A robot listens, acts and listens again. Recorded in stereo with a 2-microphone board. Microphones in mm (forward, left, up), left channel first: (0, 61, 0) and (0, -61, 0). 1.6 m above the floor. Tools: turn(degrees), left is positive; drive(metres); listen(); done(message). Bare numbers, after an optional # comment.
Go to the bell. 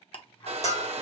# The bell: about 65° left or 115° left.
turn(65)
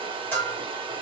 # So it is at 20° left.
turn(20)
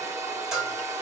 drive(1.0)
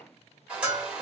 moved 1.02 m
# The bell is now 10° right.
turn(-10)
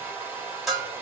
drive(1.0)
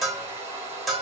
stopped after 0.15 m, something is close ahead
done("Arrived at the bell, straight ahead.")